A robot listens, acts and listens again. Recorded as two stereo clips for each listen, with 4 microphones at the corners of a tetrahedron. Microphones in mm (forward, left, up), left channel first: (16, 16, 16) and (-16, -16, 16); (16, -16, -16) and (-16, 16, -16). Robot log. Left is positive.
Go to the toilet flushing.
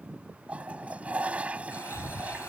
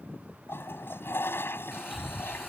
note: The toilet flushing: 75° right.
cmd yaw -75
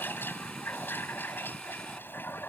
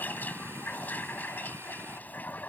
cmd fwd 1.0
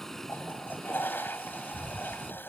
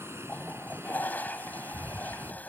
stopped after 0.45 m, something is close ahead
end: Blocked. The toilet flushing is further on, straight ahead.